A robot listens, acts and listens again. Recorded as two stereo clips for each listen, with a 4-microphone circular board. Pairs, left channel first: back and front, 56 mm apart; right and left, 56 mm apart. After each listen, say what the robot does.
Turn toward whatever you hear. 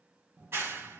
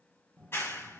Turn 45° right.
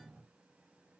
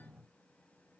Keep listening.
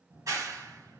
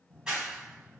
Turn 15° left.
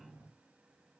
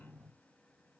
Keep listening.
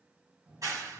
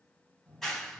Facing the clap.